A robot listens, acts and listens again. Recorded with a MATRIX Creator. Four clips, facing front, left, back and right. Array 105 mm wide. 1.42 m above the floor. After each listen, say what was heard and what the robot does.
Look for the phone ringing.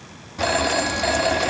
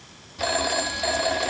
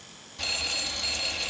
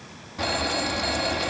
The phone ringing: 20° left. Turn 20° left.
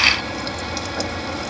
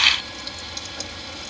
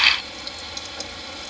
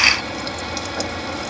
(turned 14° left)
Keep listening.
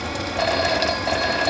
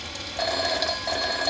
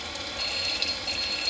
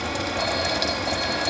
Found it: a phone ringing, straight ahead.